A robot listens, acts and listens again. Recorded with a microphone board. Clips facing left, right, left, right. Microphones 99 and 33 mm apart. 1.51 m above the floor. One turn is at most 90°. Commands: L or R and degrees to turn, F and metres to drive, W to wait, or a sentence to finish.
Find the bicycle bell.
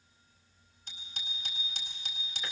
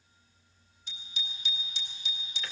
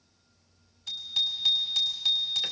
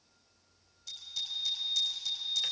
L50
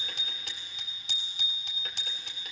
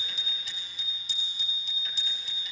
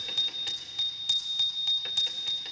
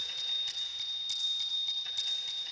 L80
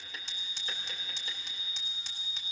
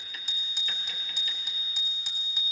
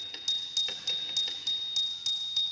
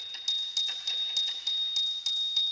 Facing the bicycle bell, 2 to 4 m away.